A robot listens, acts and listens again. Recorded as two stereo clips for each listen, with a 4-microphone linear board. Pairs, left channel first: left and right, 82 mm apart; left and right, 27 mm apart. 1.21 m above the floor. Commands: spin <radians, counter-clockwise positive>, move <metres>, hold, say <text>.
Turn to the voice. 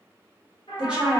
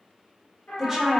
spin -0.52
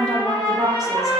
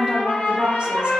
spin -2.36
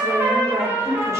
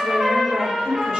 spin -0.61
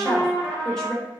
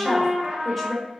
say Found it: a woman speaking, straight ahead, 1 to 2 m away.